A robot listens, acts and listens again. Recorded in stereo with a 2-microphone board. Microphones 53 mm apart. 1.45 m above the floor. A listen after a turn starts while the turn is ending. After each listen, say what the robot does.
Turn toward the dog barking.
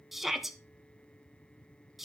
Keep listening.
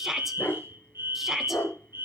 Turn 45° left.
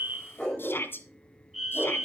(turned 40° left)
Turn 20° left.
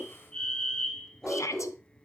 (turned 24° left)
Found it: a dog barking, straight ahead.